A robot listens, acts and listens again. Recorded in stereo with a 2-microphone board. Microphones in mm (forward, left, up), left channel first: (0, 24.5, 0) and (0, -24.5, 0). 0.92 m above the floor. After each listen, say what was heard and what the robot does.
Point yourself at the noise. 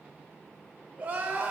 The crying: about 30° right or 150° right. Turn 30° right.
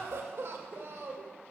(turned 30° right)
So it is at 120° right. Turn 120° right.
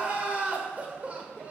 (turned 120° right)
The crying is now 30° right. Turn 30° right.
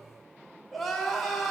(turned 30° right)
Found it: crying, straight ahead.